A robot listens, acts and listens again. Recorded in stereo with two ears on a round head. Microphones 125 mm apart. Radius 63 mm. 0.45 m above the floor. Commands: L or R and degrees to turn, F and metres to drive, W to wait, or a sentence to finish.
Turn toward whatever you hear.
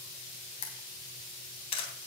L35
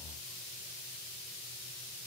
W
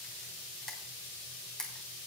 Facing the camera shutter, 2 to 4 m away.